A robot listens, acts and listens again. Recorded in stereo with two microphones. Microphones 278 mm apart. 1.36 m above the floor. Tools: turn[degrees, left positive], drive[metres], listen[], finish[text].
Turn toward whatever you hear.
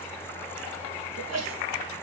Thought: The sneeze: about 65° right or 115° right.
Action: turn[-65]
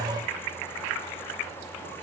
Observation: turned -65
Action: listen[]
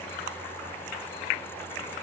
Action: finish[I heard a sneeze, but can't make it out now. It was about straight ahead or 50° right.]